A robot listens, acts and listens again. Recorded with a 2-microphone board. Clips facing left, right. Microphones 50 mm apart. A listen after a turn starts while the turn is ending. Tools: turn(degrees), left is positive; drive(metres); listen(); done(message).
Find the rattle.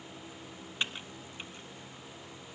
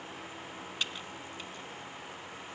listen()
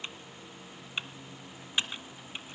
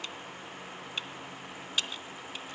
listen()
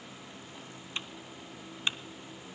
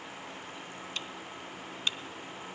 done("I can't make out a rattle, only typing on a keyboard.")